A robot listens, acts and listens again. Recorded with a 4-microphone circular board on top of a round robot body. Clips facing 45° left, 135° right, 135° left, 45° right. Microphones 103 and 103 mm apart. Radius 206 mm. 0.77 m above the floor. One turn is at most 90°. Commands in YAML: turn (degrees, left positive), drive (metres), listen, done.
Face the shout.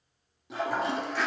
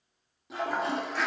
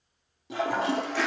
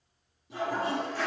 listen: true
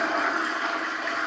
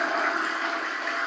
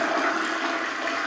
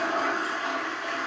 listen: true
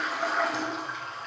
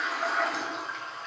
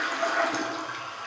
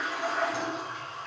done: "I can't make out a shout to turn to."